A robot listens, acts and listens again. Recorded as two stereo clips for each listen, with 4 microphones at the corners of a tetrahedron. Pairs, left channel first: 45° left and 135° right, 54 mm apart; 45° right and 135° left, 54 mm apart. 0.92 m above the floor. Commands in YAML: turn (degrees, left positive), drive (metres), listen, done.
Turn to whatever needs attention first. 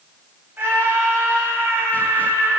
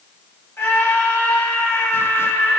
turn: -85
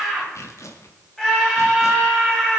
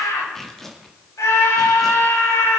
turn: -35
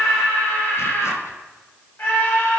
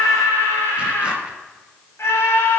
done: "Facing the scream, over 4 m away."